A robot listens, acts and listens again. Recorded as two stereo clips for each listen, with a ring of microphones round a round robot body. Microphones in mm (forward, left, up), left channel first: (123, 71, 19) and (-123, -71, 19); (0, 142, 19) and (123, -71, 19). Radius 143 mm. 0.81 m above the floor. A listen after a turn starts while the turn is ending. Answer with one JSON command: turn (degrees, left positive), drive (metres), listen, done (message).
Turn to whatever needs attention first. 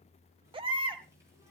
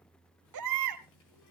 {"turn": -75}
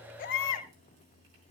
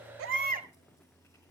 {"done": "Found it: a baby crying, straight ahead."}